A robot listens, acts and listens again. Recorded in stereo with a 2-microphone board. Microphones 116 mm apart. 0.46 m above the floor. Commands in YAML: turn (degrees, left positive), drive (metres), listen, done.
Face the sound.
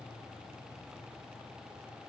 listen: true
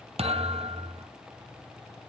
turn: -60
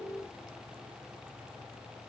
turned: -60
listen: true
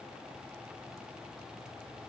done: "I heard a thud, but can't make it out now. It was about straight ahead or 60° right."